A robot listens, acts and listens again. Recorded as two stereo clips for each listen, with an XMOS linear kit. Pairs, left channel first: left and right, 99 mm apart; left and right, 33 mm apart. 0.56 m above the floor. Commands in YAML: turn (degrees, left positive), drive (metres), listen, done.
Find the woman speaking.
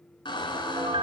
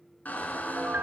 listen: true
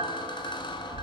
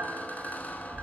listen: true
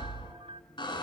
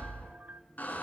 done: "I can't make out a woman speaking to turn to."